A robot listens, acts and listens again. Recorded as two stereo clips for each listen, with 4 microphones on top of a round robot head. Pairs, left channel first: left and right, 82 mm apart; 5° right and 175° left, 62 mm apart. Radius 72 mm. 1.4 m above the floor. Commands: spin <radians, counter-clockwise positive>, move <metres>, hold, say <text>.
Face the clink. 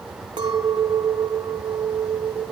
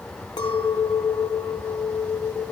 spin -0.70
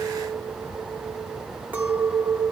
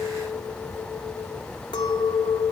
spin -0.26
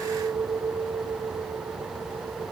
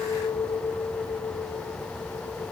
say Facing the clink.